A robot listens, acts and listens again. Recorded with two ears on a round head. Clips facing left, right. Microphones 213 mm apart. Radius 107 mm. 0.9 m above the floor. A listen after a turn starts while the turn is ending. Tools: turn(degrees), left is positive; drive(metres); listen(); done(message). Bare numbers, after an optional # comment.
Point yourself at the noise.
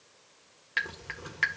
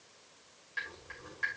turn(90)
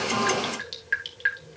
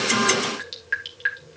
done("Found it: dripping, straight ahead.")